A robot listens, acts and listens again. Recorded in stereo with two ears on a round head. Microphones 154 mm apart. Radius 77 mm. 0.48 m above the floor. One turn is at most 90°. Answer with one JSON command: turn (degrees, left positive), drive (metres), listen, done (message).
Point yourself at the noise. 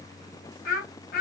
{"turn": 55}
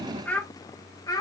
{"turn": 25}
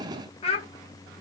{"turn": 35}
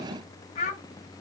{"turn": 40}
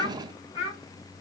{"turn": 35}
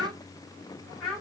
{"done": "Found it: a child speaking, straight ahead."}